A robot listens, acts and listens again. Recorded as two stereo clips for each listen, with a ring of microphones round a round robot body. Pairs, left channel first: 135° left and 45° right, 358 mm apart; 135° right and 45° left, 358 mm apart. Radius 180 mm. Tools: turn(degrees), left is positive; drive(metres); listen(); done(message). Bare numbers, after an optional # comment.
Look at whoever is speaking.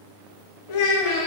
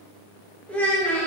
# The child speaking: 140° left.
turn(140)
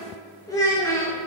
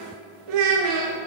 # The child speaking is now 55° left.
turn(55)
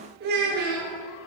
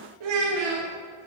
# The child speaking is now 20° left.
turn(20)
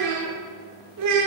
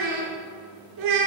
done("Found it: a child speaking, straight ahead, 1 to 2 m away.")